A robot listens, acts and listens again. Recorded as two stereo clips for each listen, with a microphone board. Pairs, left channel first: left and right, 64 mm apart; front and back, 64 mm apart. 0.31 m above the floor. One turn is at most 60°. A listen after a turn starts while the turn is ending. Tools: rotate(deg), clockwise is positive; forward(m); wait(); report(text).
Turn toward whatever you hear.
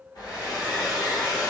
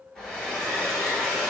rotate(-60)
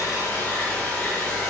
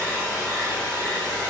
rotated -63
rotate(-15)
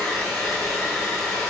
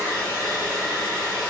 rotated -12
report("Found it: a hair dryer, straight ahead, 1 to 2 m away.")